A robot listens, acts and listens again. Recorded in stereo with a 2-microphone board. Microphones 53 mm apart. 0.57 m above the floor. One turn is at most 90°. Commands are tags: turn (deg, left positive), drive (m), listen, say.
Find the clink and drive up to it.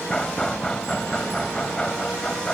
<listen/>
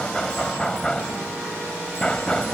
<listen/>
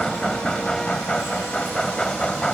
<say>I can't make out a clink to turn to.</say>